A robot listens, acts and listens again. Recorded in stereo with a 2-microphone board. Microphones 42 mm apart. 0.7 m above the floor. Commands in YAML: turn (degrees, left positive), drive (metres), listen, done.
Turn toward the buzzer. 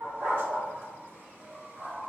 listen: true
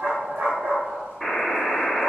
turn: -30
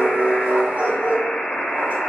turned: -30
turn: 25
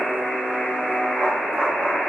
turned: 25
done: "Facing the buzzer, 1 to 2 m away."